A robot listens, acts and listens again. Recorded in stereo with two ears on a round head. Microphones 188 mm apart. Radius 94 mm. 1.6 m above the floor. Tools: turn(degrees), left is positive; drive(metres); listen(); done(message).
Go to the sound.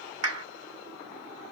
turn(degrees=-70)
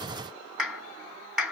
drive(metres=1.0)
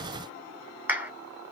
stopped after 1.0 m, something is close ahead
turn(degrees=-10)
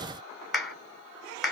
done("I am next to the clap.")